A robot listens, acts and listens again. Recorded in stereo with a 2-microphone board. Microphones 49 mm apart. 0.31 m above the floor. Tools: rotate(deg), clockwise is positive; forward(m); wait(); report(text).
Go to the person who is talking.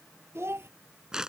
rotate(55)
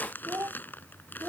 rotate(70)
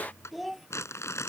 forward(1.0)
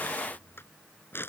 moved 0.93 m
wait()
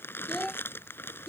forward(1.0)
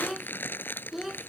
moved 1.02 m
forward(1.0)
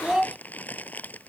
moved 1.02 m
rotate(15)
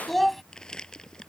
forward(1.0)
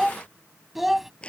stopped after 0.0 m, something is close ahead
report("I am next to the child speaking.")